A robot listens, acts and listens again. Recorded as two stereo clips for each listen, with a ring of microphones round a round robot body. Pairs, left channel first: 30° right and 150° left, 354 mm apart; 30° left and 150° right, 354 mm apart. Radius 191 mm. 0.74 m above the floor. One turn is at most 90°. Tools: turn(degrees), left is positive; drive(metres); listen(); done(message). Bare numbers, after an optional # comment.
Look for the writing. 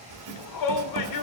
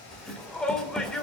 # The writing: 120° left.
turn(90)
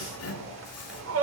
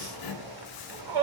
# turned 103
# The writing is now 15° left.
turn(15)
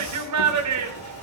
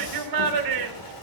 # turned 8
# Nothing new. It was at 10° left.
turn(10)
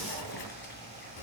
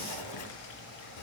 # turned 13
done("Facing the writing.")